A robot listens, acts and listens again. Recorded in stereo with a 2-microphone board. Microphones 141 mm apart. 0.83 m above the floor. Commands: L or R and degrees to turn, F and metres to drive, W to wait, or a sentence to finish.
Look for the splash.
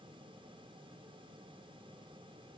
W
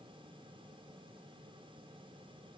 W
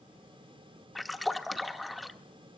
L30
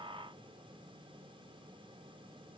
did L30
W
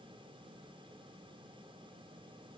I heard a splash, but can't make it out now. It was about 30° right or 150° left.